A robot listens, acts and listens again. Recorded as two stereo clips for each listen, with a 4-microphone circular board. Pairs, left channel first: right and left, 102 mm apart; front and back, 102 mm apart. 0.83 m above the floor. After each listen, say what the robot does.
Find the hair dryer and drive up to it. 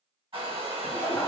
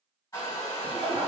Turn 55° left.
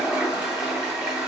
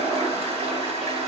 Keep listening.
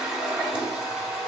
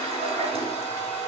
Turn 10° left.
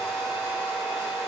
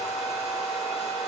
Drive 1.0 m forward.
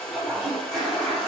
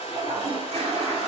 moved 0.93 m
Turn 10° right.
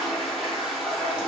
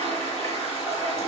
Keep listening.
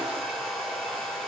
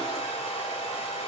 Drive 1.0 m forward.
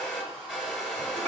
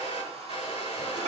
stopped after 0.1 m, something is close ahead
Arrived at the hair dryer, straight ahead.